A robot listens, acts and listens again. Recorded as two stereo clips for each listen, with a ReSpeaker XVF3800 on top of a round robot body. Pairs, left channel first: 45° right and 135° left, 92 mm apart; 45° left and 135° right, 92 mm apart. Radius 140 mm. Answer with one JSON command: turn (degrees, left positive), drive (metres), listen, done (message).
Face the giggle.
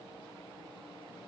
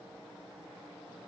{"listen": true}
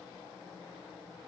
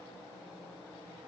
{"listen": true}
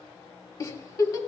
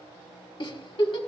{"turn": 10}
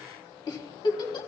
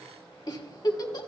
{"done": "Found it: a giggle, straight ahead, 1 to 2 m away."}